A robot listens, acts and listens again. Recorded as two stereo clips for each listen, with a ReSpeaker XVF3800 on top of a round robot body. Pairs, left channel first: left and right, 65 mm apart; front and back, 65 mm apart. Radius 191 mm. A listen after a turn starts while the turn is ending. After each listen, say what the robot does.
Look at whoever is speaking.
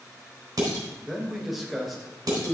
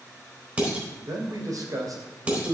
Turn 180° left.
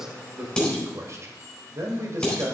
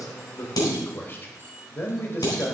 Turn 50° right.
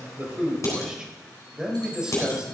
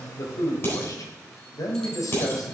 Turn 15° right.
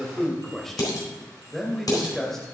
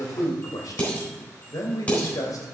Facing the man speaking.